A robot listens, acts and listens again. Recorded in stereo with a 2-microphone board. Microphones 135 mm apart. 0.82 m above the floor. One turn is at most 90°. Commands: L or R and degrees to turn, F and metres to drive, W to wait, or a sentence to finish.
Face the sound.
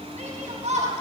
R55
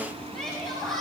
Facing the shout.